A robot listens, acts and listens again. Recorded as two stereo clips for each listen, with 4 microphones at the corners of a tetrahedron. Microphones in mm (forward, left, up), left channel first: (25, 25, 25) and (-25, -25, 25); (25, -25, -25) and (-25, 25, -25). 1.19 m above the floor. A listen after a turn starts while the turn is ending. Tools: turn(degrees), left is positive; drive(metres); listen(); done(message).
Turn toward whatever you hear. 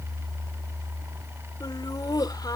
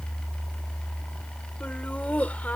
turn(degrees=25)
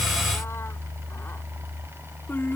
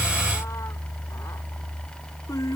turn(degrees=-15)
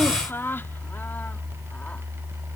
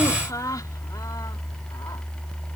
turn(degrees=-15)
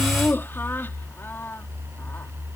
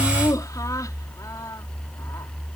turn(degrees=-15)
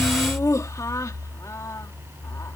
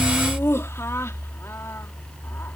done("Found it: laughter, straight ahead.")